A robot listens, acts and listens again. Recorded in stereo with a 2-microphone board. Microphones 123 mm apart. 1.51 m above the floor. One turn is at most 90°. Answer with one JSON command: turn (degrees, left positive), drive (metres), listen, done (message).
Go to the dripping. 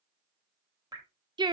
{"turn": -30}
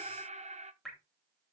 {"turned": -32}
{"drive": 1.0}
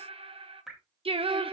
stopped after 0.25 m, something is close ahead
{"done": "Blocked. The dripping is further on, straight ahead."}